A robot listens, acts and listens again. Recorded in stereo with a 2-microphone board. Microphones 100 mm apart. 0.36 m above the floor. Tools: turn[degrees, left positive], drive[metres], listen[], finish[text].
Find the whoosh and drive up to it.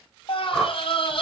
Action: turn[30]
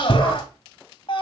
Action: listen[]
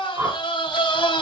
Thought: So it is at 30° right.
Action: turn[-30]
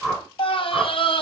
Action: drive[1.0]
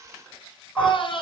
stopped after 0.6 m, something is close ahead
Action: listen[]
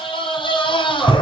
Action: listen[]
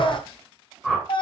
Action: finish[Blocked. The whoosh is further on, straight ahead.]